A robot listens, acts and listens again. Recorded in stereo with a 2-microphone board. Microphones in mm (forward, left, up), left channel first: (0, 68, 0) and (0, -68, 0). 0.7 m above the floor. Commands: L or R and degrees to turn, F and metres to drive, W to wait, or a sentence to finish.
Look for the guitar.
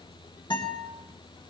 L35
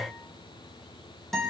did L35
Found it: a guitar, straight ahead, 2 to 4 m away.